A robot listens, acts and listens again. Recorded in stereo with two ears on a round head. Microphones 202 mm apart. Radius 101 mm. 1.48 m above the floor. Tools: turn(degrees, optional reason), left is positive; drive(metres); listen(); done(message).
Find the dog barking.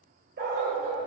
turn(degrees=-45, reason="The dog barking: about 45° right or 135° right.")
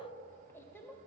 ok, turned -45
listen()
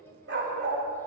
turn(degrees=-50, reason="The dog barking: about 50° right or 130° right.")
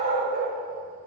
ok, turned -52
turn(degrees=-40, reason="So it is at 40° right.")
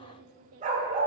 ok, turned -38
turn(degrees=-35, reason="The dog barking is now 35° right.")
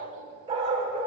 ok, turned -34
turn(degrees=-25, reason="The dog barking is now 25° right.")
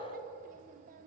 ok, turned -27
listen()
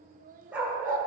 done("Facing the dog barking.")